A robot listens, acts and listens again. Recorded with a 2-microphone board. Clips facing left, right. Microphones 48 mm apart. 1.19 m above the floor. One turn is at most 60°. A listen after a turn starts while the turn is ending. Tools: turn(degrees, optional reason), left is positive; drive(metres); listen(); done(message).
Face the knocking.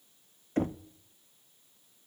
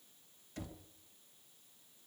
turn(degrees=40, reason="The knocking: about 40° left or 140° left.")
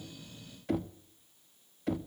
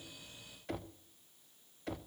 done("Facing the knocking.")